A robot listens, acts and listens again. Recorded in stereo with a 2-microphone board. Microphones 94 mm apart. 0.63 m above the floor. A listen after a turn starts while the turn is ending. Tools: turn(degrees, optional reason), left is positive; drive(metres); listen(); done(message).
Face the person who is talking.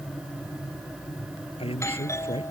turn(degrees=70, reason="The man speaking: about 70° left or 110° left.")
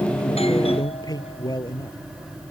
turn(degrees=40, reason="So it is at 40° left.")
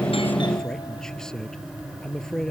done("Facing the man speaking.")